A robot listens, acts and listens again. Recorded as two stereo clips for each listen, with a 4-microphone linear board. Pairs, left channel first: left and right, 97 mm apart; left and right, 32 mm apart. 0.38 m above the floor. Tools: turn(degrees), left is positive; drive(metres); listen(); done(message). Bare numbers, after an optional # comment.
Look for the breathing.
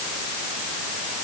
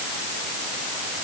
listen()
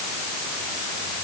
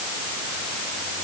listen()
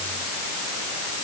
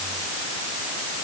done("I can't make out breathing to turn to.")